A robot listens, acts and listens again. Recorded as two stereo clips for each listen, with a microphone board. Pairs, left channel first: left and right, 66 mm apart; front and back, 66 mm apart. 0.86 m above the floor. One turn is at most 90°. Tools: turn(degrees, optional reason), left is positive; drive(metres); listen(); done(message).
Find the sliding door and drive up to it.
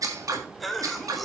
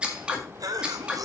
listen()
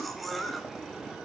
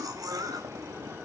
listen()
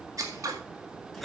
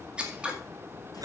done("I can't make out a sliding door, only scissors and a cough.")